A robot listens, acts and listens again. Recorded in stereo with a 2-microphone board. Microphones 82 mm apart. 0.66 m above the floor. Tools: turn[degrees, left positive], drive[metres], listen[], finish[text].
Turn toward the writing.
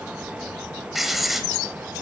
Action: turn[30]
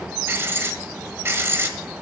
Thought: So it is at 30° right.
Action: turn[-30]
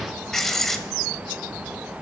Action: finish[Facing the writing, 1 to 2 m away.]